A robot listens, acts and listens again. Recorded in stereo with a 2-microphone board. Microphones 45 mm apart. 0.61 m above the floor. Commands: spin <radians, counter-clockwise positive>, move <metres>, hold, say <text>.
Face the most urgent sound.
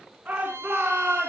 spin -0.61
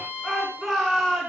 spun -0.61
say Found it: a shout, straight ahead, over 4 m away.